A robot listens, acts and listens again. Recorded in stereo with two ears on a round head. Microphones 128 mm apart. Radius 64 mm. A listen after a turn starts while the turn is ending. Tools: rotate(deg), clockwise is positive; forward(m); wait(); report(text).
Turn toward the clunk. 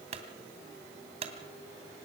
rotate(45)
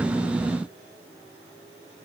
wait()
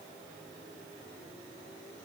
report("I heard a clunk, but can't make it out now. It was about straight ahead or 90° right.")